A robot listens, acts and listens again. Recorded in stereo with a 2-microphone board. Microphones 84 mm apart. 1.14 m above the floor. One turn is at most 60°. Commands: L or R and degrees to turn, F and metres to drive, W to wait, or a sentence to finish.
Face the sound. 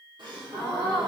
R60
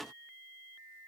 W
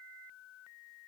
I heard a gasp, but can't make it out now. It was about 5° right or 55° right.